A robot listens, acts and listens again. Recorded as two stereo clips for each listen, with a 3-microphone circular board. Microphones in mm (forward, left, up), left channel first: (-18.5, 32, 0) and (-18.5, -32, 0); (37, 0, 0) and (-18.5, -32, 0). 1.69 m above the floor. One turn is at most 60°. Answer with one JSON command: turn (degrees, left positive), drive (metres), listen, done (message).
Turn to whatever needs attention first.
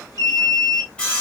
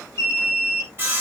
{"turn": 60}
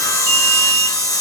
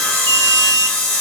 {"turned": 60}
{"turn": 10}
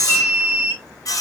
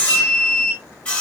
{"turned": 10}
{"done": "Found it: an alarm, straight ahead."}